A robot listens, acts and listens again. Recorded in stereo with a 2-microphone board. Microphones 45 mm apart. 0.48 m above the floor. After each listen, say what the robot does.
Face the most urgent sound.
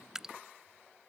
Keep listening.
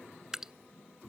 Keep listening.
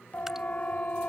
Turn 35° left.
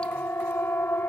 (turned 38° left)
Turn 105° left.
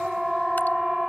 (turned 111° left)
Turn 10° right.
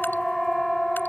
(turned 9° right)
Facing the siren.